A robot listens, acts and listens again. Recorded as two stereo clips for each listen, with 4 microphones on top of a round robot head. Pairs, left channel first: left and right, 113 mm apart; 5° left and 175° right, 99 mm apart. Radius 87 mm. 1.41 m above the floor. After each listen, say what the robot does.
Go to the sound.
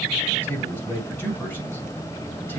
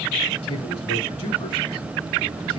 Turn 20° left.
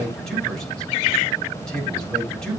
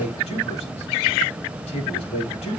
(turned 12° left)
Drive 1.0 m forward.
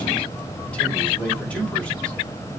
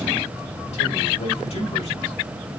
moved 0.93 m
Turn 10° left.
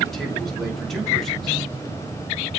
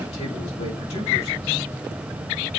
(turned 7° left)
Drive 1.0 m forward.
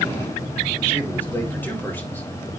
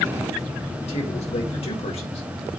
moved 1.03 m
Turn 15° left.
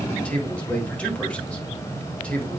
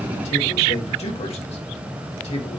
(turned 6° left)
Turn 10° left.
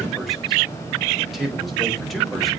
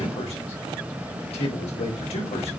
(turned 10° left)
Drive 1.0 m forward.
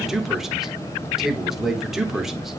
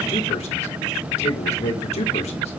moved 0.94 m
Drive 1.0 m forward.
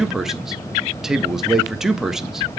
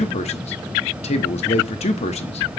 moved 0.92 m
Drive 1.0 m forward.
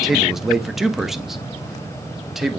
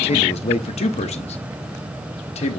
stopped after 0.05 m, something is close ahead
I am next to the man speaking.